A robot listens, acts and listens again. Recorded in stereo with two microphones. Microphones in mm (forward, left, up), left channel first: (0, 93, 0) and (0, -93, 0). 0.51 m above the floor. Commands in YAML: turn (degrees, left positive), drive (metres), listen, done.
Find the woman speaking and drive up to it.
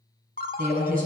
turn: -50
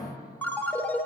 listen: true
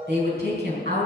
turn: -75
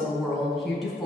drive: 1.0
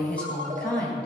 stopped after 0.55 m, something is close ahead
done: "Blocked. The woman speaking is further on, straight ahead."